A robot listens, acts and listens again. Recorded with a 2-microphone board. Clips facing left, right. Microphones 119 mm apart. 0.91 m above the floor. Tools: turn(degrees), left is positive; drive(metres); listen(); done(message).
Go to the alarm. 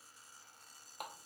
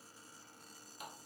listen()
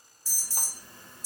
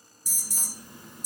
turn(degrees=-30)
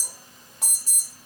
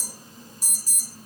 turn(degrees=-135)
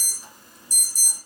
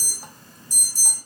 turn(degrees=15)
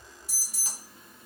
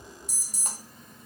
drive(metres=1.0)
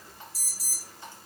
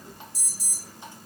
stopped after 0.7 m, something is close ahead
done("I am next to the alarm.")